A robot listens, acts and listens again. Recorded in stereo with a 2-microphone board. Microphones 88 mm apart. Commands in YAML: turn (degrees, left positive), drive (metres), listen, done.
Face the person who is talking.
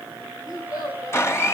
turn: 35
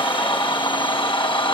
listen: true
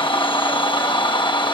listen: true
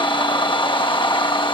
done: "I heard a child speaking, but can't make it out now. It was about straight ahead or 110° left."